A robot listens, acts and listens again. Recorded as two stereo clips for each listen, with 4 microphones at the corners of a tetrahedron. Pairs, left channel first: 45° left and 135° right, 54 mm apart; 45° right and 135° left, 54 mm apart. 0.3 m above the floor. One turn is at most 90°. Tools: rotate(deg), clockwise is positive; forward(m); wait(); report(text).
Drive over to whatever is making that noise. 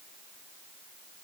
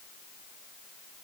wait()
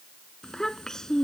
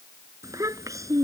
rotate(-90)
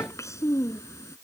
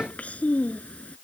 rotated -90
rotate(-20)
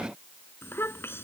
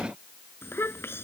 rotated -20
forward(1.0)
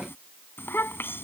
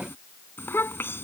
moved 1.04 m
forward(1.0)
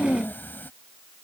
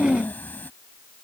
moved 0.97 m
forward(1.0)
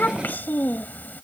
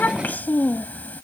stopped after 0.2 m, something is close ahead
report("I am next to the child speaking.")